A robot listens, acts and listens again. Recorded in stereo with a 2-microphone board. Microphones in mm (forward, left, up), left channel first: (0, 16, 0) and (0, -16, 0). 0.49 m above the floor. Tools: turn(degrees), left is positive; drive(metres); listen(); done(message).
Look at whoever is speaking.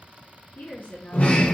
turn(degrees=90)
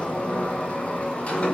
listen()
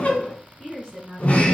turn(degrees=-10)
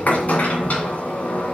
listen()
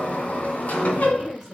turn(degrees=-10)
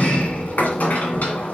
listen()
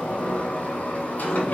listen()
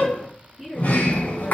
done("Found it: a woman speaking, straight ahead.")